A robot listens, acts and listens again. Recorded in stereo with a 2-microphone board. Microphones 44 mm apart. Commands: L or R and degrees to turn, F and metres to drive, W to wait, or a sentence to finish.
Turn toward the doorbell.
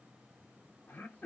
W
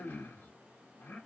W
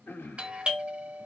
R25
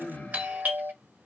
R130
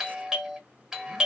R15
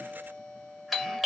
Facing the doorbell.